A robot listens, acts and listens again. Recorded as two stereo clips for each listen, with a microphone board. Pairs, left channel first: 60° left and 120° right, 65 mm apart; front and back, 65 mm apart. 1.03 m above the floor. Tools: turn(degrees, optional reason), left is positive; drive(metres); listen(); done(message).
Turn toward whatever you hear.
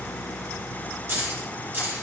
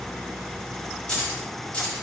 turn(degrees=-65, reason="The keys jangling: 65° right.")
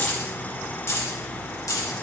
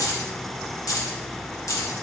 turn(degrees=35, reason="The keys jangling is now 35° left.")
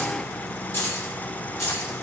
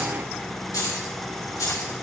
turn(degrees=25, reason="The keys jangling is now 25° left.")
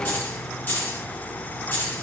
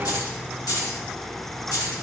turn(degrees=10, reason="The keys jangling is now 10° left.")
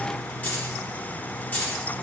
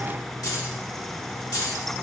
done("Found it: keys jangling, straight ahead.")